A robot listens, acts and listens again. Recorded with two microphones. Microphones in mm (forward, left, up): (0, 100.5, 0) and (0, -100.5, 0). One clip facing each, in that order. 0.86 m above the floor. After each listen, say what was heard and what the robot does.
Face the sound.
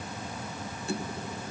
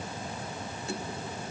Keep listening.
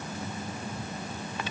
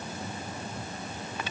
Keep listening.
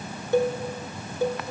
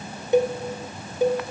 The cowbell: about 20° right or 160° right. Turn 20° right.
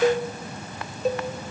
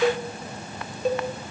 Facing the cowbell.